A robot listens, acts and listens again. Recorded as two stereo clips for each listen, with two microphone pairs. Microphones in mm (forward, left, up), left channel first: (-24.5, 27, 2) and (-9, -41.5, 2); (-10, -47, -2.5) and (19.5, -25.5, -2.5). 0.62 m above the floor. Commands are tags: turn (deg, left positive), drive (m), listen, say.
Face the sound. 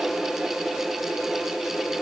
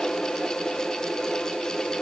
<listen/>
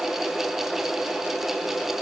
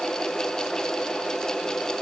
<listen/>
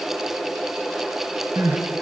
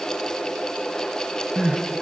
<turn deg="-45"/>
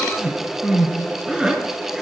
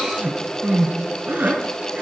<say>Facing the crying, 2 to 4 m away.</say>